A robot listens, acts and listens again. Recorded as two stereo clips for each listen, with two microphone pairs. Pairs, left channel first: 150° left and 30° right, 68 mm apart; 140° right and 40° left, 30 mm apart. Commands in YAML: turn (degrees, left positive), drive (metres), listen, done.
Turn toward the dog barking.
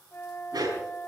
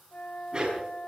turn: -20
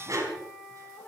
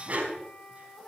done: "Facing the dog barking."